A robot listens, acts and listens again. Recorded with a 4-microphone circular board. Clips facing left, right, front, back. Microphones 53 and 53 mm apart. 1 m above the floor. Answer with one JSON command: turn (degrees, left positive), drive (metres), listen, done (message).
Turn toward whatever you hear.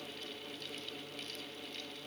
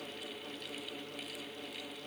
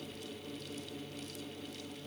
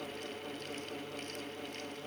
{"listen": true}
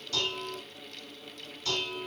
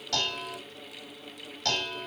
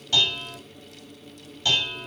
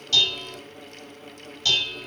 {"turn": -70}
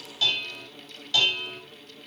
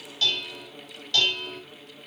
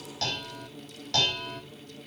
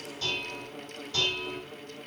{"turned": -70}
{"done": "Found it: dishes clattering, straight ahead, over 4 m away."}